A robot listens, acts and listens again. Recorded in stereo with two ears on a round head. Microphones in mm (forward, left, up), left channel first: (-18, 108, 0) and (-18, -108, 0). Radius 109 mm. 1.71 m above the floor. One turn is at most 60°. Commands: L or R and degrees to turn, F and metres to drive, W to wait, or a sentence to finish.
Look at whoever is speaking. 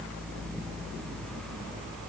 W
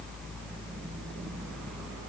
W
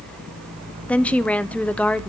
L30
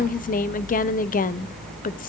L60
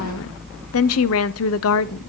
L60
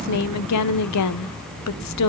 L60
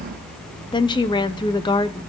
L20
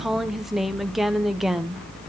Facing the woman speaking, under 1 m away.